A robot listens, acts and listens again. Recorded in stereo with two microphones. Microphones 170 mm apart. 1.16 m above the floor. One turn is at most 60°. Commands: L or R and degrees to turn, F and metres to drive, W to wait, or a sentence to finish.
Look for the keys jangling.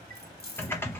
L60
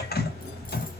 W
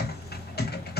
W
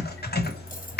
I heard keys jangling, but can't make it out now. It was about 10° left or 50° left.